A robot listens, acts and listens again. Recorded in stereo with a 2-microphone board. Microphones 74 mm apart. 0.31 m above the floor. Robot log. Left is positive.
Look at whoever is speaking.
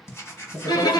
note: The woman speaking: about 30° left or 150° left.
cmd yaw +30
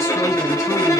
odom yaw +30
cmd idle
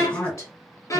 note: So it is at 120° left.
cmd yaw +120
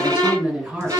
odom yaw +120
note: The woman speaking is now 30° right.
cmd yaw -30
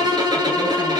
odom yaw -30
cmd idle
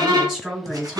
end: Found it: a woman speaking, straight ahead, 2 to 4 m away.